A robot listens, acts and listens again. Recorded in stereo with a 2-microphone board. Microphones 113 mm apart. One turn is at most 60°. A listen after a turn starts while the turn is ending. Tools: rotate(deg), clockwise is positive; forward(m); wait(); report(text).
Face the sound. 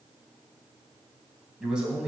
rotate(30)
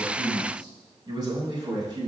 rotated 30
rotate(60)
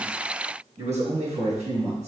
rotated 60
rotate(60)
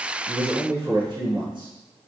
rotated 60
rotate(45)
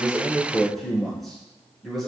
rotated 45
report("Facing the man speaking, over 4 m away.")